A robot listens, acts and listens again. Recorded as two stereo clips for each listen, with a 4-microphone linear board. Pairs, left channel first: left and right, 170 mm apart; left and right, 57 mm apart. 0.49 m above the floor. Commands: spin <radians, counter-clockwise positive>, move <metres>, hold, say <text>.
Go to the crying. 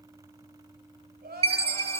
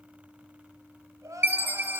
spin -1.22
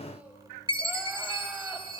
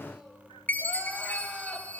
hold
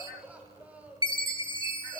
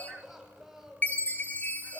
spin -0.17
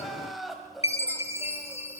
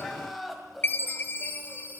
move 1.0
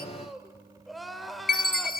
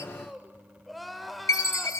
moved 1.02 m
move 1.0
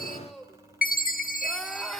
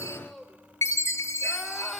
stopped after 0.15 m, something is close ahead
say Arrived at the crying, straight ahead.